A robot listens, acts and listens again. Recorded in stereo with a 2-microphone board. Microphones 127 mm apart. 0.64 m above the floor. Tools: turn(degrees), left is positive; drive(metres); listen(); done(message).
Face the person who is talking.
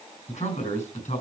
turn(degrees=65)
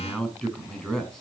done("Found it: a man speaking, straight ahead, over 4 m away.")